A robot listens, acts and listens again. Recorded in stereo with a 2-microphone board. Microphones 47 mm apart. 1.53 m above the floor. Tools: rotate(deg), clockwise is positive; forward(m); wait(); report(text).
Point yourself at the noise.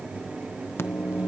rotate(-60)
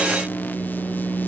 rotate(-45)
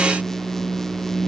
rotate(-10)
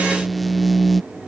report("Facing the microwave.")